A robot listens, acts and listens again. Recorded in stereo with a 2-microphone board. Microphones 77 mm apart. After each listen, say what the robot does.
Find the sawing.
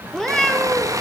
Turn 45° right.
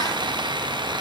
Turn 90° right.
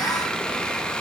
Keep listening.
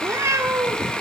Turn 10° left.
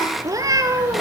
Keep listening.
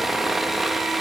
Found it: sawing, straight ahead.